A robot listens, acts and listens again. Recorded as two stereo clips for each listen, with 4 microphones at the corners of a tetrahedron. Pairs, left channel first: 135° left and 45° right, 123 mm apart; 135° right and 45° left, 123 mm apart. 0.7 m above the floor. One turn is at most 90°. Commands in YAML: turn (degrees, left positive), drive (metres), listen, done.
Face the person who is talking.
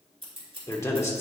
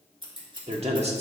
turn: 70
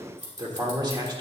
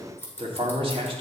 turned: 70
done: "Found it: a man speaking, straight ahead."